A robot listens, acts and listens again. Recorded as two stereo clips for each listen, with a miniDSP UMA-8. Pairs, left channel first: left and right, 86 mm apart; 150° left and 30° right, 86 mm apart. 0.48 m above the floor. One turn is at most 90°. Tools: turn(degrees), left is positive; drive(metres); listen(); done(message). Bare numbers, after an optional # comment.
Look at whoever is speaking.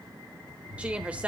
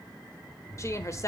# The woman speaking: 165° right.
turn(-90)
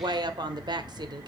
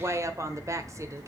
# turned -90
# The woman speaking is now 75° right.
turn(-75)
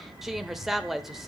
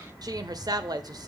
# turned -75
done("Facing the woman speaking.")